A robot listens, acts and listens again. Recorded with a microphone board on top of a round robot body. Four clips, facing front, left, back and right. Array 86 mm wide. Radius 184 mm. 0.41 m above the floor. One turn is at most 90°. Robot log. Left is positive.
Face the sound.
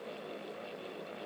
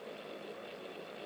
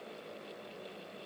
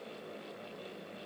cmd idle
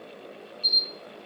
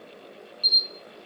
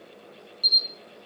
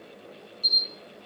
note: The camera shutter: 165° left.
cmd yaw +90
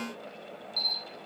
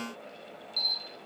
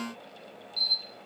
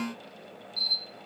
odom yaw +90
note: The camera shutter is now 60° left.
cmd yaw +60
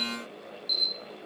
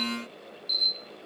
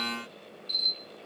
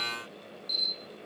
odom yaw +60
end: Facing the camera shutter, 1 to 2 m away.